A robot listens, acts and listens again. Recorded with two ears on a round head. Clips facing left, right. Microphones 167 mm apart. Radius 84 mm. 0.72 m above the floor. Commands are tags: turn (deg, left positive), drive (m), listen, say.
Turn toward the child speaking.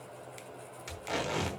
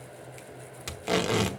<listen/>
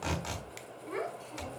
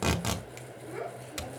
<turn deg="90"/>
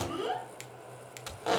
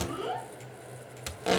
<turn deg="15"/>
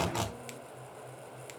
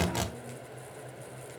<listen/>
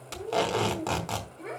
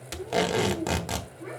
<turn deg="35"/>
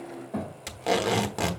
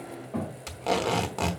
<turn deg="10"/>
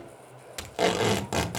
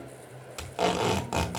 <listen/>
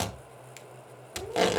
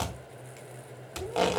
<listen/>
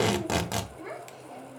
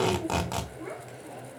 <say>Facing the child speaking.</say>